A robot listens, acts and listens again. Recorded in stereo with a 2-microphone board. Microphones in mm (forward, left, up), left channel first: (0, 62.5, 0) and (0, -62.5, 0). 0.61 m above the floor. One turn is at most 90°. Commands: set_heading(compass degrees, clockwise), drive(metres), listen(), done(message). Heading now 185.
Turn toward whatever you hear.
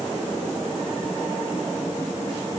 listen()
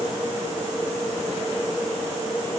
listen()
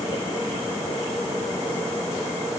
done("I can't make out anything.")